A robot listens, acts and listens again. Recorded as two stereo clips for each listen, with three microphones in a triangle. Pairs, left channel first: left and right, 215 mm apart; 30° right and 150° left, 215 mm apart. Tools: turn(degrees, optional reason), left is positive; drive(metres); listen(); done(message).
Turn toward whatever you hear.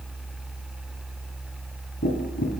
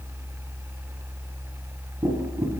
turn(degrees=80, reason="The tapping: 80° left.")
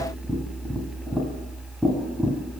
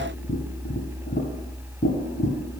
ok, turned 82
done("Facing the tapping.")